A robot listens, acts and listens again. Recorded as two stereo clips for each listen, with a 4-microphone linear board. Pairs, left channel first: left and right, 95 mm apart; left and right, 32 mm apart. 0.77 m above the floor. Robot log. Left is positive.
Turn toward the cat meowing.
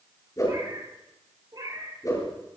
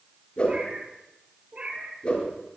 note: The cat meowing: about 40° right or 140° right.
cmd yaw -40
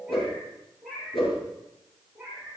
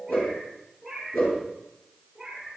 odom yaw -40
end: Found it: a cat meowing, straight ahead.